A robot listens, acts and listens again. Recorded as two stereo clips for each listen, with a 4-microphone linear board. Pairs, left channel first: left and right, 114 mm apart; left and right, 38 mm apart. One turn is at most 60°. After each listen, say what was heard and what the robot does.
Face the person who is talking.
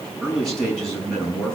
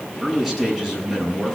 Turn 30° left.
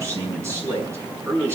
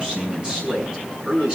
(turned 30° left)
So it is at 20° right. Turn 20° right.
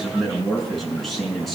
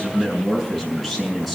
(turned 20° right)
Facing the man speaking.